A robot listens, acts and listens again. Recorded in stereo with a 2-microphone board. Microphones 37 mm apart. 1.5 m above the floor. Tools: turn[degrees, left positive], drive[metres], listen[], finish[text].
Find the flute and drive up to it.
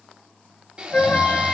Thought: The flute: about 40° left or 140° left.
Action: turn[40]
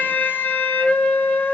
Thought: So it is at 90° left.
Action: turn[90]
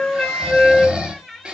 Thought: The flute is now 20° left.
Action: turn[20]
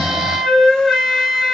Action: drive[1.0]
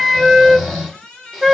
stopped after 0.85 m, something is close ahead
Action: finish[Arrived at the flute, straight ahead.]